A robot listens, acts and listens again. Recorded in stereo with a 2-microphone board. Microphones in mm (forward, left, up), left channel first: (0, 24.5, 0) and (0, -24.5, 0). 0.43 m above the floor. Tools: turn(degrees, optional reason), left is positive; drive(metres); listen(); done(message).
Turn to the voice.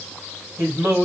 turn(degrees=-50, reason="The man speaking: about 50° right or 130° right.")
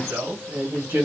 turn(degrees=-70, reason="So it is at 70° right.")
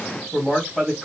turn(degrees=10, reason="The man speaking is now 10° left.")
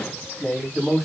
done("Found it: a man speaking, straight ahead, 2 to 4 m away.")